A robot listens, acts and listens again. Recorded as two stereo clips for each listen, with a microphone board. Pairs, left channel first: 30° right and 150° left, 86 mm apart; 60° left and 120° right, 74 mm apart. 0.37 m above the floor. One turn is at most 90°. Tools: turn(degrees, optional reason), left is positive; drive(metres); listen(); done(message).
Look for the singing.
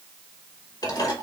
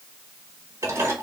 listen()
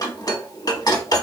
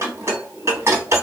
listen()
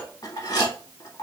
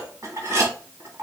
done("I can't make out singing, only dishes clattering.")